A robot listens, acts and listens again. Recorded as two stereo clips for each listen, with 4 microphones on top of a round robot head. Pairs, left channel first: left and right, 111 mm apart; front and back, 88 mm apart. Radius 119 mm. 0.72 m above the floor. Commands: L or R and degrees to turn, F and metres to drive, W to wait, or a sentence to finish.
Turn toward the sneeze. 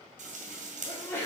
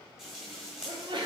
L160
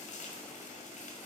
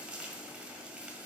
I heard a sneeze from this way, but can't make it out now.